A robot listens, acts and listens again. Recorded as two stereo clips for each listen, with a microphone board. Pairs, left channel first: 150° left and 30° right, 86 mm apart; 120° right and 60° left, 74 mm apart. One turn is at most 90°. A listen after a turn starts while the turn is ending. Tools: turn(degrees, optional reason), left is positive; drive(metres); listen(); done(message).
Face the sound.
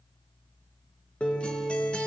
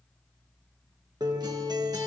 turn(degrees=75, reason="The guitar: 75° left.")
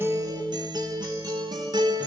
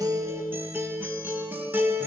done("Facing the guitar, 1 to 2 m away.")